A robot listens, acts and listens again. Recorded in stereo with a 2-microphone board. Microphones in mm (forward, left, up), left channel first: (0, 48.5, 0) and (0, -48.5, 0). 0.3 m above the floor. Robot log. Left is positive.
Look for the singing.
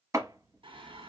note: The singing: about 65° right or 115° right.
cmd yaw -65
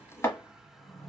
end: Facing the singing, 1 to 2 m away.